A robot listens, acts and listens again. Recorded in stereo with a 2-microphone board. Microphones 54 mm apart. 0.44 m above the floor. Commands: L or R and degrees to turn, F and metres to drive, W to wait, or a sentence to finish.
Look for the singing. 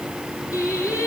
L90
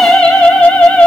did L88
L25
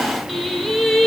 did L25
L10
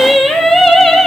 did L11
L10
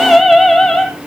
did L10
Found it: singing, straight ahead.